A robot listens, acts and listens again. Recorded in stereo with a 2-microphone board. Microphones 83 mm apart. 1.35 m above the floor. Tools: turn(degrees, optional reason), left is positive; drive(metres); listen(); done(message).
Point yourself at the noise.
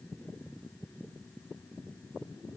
listen()
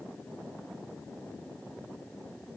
listen()
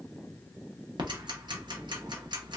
turn(degrees=-65, reason="The ticking: about 65° right or 115° right.")
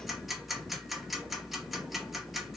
done("Facing the ticking, under 1 m away.")